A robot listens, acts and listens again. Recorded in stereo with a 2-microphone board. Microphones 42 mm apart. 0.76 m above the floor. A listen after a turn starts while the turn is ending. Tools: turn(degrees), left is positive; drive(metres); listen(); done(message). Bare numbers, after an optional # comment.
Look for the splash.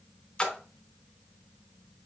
# The splash: about 20° left or 160° left.
turn(20)
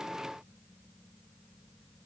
listen()
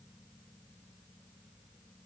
done("I heard a splash, but can't make it out now. It was about straight ahead or 140° left.")